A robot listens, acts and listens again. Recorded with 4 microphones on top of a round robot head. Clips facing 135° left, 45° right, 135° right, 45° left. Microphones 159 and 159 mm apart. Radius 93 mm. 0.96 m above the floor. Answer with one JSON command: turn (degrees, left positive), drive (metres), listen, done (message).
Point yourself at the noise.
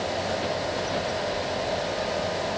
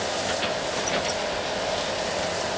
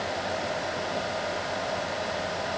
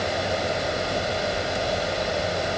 {"listen": true}
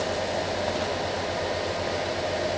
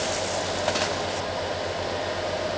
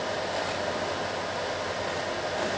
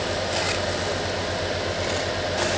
{"listen": true}
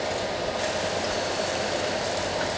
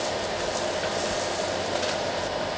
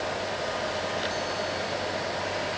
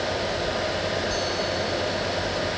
{"done": "I can't make out anything."}